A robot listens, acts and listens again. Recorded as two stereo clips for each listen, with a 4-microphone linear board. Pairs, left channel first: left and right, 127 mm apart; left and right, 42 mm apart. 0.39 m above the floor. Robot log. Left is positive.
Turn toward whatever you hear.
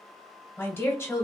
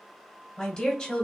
note: The woman speaking: about 20° left or 160° left.
cmd yaw +20
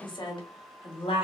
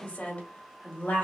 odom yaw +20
note: So it is at 135° left.
cmd yaw +135
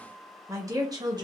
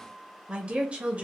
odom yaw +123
note: The woman speaking is now 35° right.
cmd yaw -35
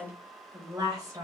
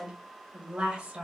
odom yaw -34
note: The woman speaking is now 30° right.
cmd yaw -30
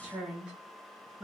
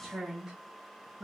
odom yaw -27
note: The woman speaking is now 10° right.
cmd yaw -10
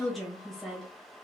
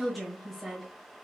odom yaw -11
end: Found it: a woman speaking, straight ahead, 1 to 2 m away.